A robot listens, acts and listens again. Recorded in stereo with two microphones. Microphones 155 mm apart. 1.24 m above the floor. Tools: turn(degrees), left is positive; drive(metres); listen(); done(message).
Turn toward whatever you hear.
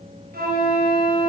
turn(degrees=-90)
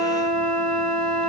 done("Facing the flute, over 4 m away.")